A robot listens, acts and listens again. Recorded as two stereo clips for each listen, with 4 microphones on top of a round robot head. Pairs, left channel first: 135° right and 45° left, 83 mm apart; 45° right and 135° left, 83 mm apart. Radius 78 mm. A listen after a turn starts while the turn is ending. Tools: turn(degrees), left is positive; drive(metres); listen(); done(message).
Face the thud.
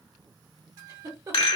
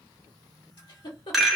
listen()
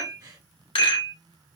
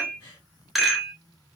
listen()
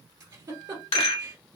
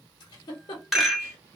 done("I can't make out a thud to turn to.")